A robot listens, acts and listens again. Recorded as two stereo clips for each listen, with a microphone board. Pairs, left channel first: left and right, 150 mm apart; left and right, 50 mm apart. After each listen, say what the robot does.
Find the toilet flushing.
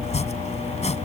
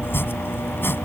Keep listening.
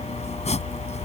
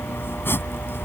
Keep listening.
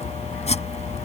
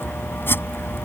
I can't make out a toilet flushing, only chopping.